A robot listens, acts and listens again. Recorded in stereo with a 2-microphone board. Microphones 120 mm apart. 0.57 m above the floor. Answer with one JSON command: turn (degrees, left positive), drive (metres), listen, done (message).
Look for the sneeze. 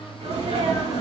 {"turn": -90}
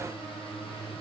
{"done": "I heard a sneeze from this way, but can't make it out now."}